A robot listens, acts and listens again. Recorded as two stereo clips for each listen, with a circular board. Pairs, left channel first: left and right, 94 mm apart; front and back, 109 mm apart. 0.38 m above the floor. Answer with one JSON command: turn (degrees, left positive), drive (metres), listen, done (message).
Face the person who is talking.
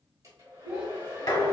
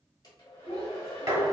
{"turn": -15}
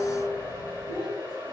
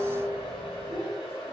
{"done": "Found it: a child speaking, straight ahead."}